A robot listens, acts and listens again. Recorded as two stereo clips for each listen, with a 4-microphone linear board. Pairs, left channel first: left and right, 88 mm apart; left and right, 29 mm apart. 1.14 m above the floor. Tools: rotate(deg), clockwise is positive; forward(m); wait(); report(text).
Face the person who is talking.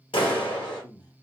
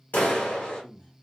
rotate(-50)
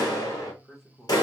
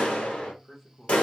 report("Facing the man speaking, under 1 m away.")